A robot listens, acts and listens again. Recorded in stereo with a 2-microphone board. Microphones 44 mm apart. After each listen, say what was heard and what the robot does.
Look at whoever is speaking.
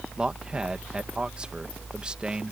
The man speaking: about 20° right or 160° right. Turn 20° right.
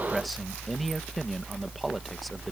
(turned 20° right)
Keep listening.
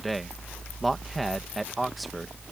Found it: a man speaking, straight ahead.